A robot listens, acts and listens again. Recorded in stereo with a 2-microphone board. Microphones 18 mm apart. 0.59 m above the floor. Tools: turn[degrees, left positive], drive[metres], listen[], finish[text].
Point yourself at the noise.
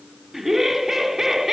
Thought: The laughter: about 20° right or 160° right.
Action: turn[-20]
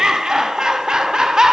Thought: So it is at 135° right.
Action: turn[-135]
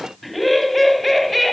Action: finish[Facing the laughter, over 4 m away.]